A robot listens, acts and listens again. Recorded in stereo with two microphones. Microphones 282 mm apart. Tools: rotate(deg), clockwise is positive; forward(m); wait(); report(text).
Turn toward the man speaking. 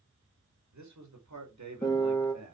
rotate(70)
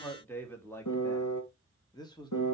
rotate(-15)
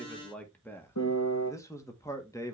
rotate(-10)
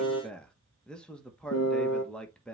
report("Facing the man speaking, 1 to 2 m away.")